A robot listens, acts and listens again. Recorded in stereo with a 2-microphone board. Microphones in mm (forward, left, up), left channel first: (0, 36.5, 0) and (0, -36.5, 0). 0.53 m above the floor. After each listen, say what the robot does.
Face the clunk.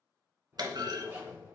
Turn 70° right.
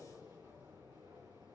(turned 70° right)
Keep listening.
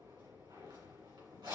I heard a clunk, but can't make it out now. It was about straight ahead or 40° right.